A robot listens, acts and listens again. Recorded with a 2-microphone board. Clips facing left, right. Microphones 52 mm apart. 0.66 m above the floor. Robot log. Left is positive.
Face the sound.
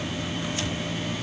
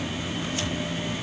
cmd idle
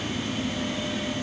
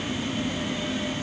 cmd idle
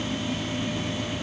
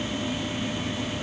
end: I can't make out anything to turn to.